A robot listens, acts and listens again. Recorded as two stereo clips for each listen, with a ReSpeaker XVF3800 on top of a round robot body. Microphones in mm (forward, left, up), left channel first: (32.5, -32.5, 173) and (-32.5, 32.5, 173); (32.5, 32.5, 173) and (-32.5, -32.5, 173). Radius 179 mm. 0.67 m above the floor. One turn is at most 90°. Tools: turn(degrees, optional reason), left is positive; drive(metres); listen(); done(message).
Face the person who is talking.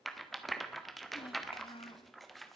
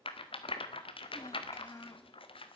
turn(degrees=-15, reason="The child speaking: 15° right.")
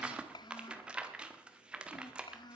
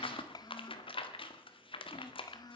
done("Facing the child speaking, under 1 m away.")